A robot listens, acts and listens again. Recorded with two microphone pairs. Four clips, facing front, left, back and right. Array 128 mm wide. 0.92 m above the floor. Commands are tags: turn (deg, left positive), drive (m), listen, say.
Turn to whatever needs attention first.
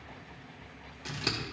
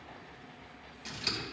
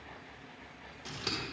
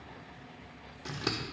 <listen/>
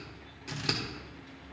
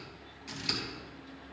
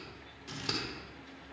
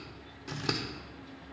<listen/>
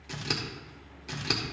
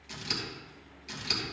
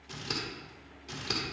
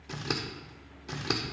<say>I can't make out anything urgent, only scissors.</say>